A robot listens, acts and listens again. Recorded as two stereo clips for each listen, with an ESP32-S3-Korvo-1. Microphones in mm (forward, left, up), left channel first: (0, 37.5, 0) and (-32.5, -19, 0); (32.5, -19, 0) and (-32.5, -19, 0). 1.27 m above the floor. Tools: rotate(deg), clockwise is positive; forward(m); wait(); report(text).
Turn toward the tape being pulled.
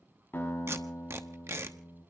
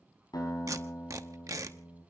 rotate(160)
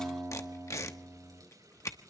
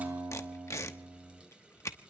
rotate(-35)
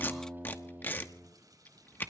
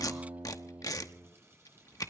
report("Found it: tape being pulled, straight ahead, 1 to 2 m away.")